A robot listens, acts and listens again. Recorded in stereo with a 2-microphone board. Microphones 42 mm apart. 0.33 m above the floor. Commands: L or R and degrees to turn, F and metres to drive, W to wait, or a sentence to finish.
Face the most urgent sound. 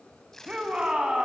R20
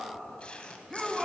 Found it: a shout, straight ahead.